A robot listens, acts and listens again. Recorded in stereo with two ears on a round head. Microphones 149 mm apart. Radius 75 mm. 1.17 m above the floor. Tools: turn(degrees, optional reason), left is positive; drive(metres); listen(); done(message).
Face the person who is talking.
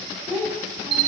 turn(degrees=-30)
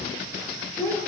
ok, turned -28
turn(degrees=10, reason="So it is at 10° left.")
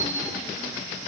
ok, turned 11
listen()
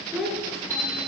done("Found it: a child speaking, straight ahead, 2 to 4 m away.")